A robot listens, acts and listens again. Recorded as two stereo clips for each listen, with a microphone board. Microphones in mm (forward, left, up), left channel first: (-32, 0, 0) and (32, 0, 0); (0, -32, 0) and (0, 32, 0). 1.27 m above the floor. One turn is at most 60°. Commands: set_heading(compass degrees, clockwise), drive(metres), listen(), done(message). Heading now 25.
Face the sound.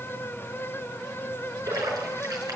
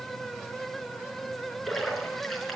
done("Found it: a splash, straight ahead, over 4 m away.")